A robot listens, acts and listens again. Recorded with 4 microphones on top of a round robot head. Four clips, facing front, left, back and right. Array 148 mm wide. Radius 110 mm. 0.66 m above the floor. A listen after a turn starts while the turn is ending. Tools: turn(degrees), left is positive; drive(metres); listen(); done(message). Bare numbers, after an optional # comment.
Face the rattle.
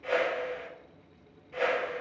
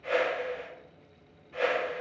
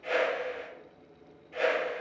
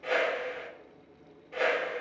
listen()
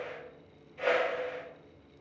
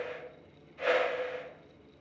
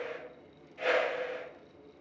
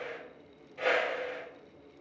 listen()
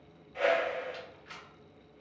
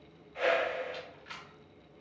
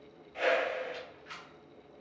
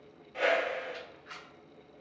# The rattle: 75° left.
turn(75)
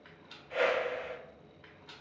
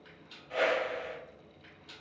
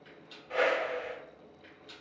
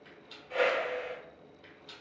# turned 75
# The rattle is now 15° right.
turn(-15)
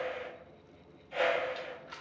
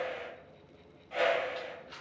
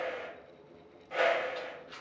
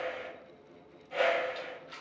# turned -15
done("Found it: a rattle, straight ahead.")